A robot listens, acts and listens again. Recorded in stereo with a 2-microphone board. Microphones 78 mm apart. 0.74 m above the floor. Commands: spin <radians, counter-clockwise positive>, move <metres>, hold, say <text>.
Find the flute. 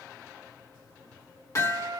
spin -1.05
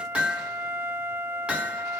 spin -0.70
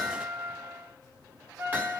spin -0.52
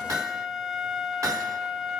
spin -0.17
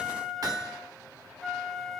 say Found it: a flute, straight ahead, 1 to 2 m away.